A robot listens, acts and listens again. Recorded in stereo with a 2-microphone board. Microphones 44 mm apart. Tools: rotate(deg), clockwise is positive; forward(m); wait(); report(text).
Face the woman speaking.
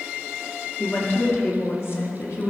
rotate(-65)
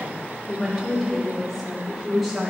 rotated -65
rotate(10)
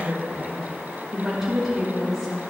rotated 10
rotate(10)
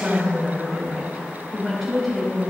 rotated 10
report("Facing the woman speaking.")